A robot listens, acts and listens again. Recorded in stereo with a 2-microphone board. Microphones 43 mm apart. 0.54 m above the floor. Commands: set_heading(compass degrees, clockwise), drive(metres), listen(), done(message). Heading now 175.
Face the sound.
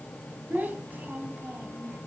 set_heading(225)
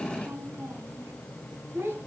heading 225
set_heading(295)
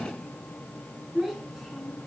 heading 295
done("Found it: a child speaking, straight ahead.")